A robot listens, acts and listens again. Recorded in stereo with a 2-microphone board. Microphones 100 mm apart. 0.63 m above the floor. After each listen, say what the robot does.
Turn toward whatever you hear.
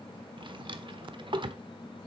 Turn 55° right.
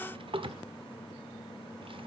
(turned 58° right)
Turn 65° right.
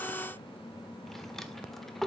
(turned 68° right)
Facing the drawer, 1 to 2 m away.